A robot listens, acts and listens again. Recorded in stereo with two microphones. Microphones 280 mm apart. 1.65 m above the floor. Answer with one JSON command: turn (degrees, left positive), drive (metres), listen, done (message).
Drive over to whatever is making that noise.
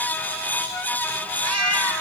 {"turn": -55}
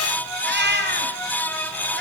{"turn": -45}
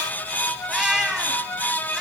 {"drive": 1.0}
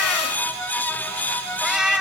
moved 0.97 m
{"drive": 1.0}
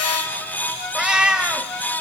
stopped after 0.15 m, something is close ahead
{"done": "Arrived at the cat meowing, straight ahead."}